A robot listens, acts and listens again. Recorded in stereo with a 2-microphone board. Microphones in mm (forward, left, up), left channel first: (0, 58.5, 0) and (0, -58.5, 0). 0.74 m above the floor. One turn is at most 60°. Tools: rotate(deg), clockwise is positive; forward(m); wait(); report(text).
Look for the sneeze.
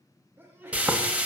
rotate(20)
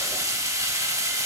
wait()
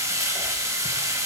report("I heard a sneeze, but can't make it out now. It was about straight ahead or 140° right.")